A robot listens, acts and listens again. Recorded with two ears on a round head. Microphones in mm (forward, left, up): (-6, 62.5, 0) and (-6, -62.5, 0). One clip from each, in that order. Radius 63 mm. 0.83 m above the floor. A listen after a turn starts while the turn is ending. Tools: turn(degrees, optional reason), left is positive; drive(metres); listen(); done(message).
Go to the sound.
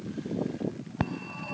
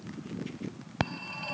turn(degrees=-90)
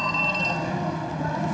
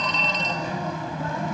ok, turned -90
turn(degrees=-15, reason="So it is at 15° right.")
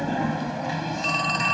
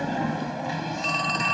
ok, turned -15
drive(metres=1.0)
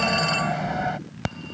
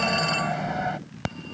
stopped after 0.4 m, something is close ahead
done("Blocked. The phone ringing is further on, straight ahead.")